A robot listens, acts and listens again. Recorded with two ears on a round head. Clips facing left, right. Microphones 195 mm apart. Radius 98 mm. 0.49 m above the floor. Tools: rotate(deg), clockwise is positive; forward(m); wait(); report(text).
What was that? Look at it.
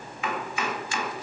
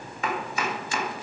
rotate(35)
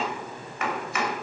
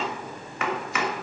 rotate(105)
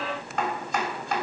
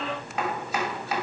report("Found it: chopping, straight ahead.")